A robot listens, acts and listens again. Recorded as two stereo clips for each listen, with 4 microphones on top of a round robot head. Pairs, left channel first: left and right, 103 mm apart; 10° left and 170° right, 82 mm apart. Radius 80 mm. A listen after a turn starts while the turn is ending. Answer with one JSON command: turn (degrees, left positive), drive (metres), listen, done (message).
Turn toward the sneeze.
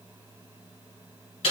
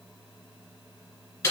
{"listen": true}
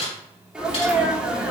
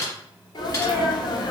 {"turn": -10}
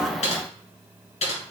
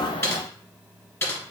{"done": "I heard a sneeze from this way, but can't make it out now."}